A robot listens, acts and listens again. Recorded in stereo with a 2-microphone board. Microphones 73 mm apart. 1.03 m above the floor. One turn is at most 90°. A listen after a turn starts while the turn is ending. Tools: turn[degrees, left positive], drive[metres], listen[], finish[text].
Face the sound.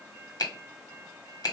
Thought: The finger snap: about 65° left or 115° left.
Action: turn[65]
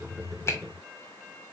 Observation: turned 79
Thought: So it is at 35° left.
Action: turn[35]
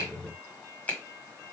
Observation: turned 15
Thought: The finger snap is now 25° left.
Action: turn[25]
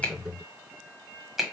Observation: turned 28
Action: finish[Found it: a finger snap, straight ahead, 1 to 2 m away.]